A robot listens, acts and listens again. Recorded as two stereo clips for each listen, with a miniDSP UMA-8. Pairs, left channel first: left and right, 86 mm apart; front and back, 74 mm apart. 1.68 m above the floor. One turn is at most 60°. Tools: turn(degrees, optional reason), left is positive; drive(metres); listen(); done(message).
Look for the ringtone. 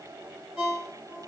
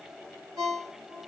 turn(degrees=-60, reason="The ringtone: 170° right.")
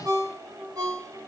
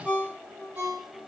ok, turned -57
turn(degrees=-60, reason="The ringtone is now 110° right.")
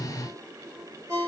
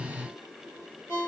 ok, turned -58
turn(degrees=-55, reason="The ringtone is now 55° right.")
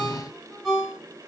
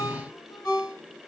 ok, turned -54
done("Found it: a ringtone, straight ahead.")